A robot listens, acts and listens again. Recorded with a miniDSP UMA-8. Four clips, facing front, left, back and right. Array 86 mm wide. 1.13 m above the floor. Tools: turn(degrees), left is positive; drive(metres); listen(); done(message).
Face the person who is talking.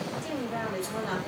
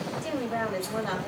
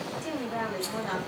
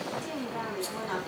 turn(degrees=100)
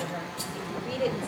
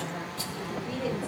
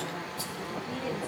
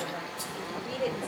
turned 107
done("Found it: a woman speaking, straight ahead, over 4 m away.")